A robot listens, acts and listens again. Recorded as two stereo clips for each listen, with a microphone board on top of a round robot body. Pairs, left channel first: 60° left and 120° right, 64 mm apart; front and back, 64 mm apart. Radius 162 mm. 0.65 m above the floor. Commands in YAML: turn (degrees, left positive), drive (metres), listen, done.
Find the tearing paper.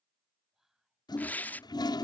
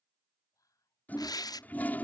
done: "Found it: tearing paper, straight ahead."